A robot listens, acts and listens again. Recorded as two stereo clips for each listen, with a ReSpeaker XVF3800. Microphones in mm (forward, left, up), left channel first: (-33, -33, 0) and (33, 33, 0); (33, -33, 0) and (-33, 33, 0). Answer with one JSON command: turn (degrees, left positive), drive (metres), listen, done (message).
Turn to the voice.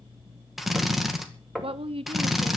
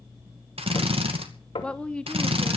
{"turn": 35}
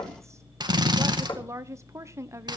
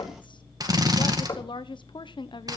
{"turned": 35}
{"turn": -15}
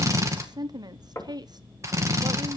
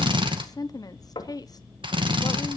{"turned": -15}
{"done": "Facing the woman speaking, 1 to 2 m away."}